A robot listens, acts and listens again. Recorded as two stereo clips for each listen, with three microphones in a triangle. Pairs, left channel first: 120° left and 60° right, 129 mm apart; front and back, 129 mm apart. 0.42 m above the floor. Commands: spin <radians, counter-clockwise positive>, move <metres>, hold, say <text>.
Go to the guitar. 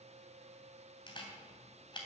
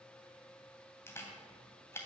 hold
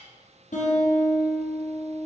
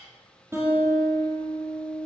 spin 1.92
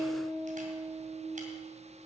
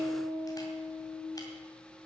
spin -0.35
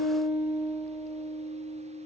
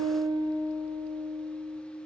move 1.0
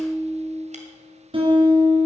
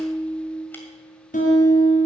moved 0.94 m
spin -0.17
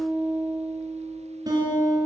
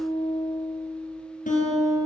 move 1.0
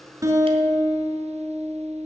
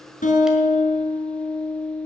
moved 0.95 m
move 1.0
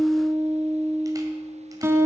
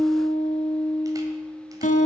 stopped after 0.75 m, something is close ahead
spin 0.17
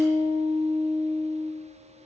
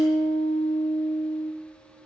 say I am next to the guitar.